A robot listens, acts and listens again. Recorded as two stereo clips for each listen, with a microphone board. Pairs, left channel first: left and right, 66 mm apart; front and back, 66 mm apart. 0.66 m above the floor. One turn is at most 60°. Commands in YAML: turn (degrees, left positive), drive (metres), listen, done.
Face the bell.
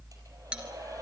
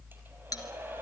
turn: -15
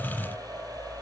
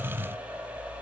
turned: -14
listen: true
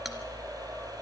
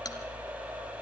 listen: true
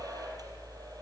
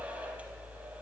done: "I heard a bell from this way, but can't make it out now."